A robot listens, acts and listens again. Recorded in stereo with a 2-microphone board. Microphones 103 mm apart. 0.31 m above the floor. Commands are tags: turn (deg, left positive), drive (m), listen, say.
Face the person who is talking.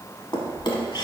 <listen/>
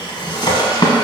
<listen/>
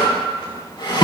<say>I can't make out anyone speaking to turn to.</say>